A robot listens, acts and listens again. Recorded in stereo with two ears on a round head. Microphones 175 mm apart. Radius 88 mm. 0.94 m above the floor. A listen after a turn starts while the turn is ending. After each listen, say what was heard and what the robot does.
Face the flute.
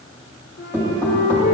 The flute: about 65° left or 115° left. Turn 65° left.
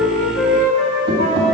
So it is at 55° left. Turn 55° left.
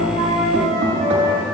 Facing the flute, 2 to 4 m away.